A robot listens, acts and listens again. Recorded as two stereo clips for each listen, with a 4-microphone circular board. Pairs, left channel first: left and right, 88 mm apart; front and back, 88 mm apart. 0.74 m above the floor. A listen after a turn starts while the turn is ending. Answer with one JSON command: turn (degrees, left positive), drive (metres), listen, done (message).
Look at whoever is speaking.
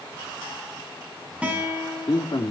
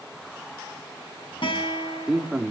{"turn": 100}
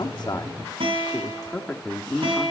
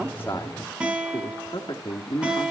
{"turn": 15}
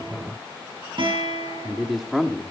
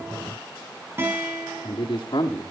{"done": "Found it: a man speaking, straight ahead, 1 to 2 m away."}